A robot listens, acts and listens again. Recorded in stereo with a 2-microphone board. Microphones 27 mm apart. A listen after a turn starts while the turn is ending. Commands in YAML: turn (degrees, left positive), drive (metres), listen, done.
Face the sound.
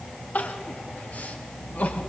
turn: 70
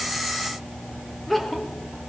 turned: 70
done: "Facing the crying."